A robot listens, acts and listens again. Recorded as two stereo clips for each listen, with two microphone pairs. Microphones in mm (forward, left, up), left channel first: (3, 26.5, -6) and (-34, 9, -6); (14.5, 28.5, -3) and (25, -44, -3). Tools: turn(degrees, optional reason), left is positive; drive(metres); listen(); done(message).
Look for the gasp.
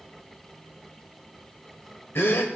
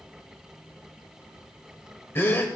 turn(degrees=40, reason="The gasp: 40° left.")
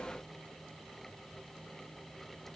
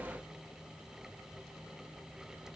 done("Facing where the gasp came from. I can't hear it now.")